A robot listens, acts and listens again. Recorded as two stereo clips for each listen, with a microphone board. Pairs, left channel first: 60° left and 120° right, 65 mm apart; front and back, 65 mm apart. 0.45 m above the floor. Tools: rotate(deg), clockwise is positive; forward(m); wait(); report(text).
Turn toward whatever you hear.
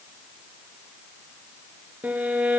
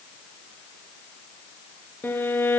rotate(55)
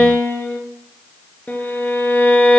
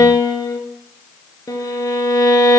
report("Facing the violin.")